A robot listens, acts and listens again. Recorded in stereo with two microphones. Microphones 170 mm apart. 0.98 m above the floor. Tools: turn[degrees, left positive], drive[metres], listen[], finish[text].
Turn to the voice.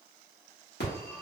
Action: listen[]
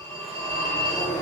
Action: listen[]
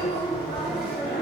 Action: finish[I can't make out anyone speaking to turn to.]